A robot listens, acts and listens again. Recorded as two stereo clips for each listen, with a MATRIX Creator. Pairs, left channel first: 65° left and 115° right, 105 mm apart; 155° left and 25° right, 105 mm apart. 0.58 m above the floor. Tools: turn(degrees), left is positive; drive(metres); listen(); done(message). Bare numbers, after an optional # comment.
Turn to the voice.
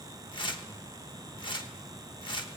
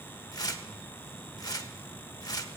listen()
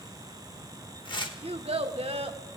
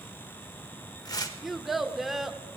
# The child speaking: 110° right.
turn(-110)
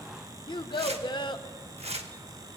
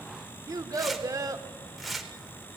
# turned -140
# The child speaking is now 30° left.
turn(30)
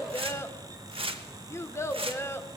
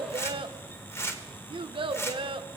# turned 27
done("Facing the child speaking.")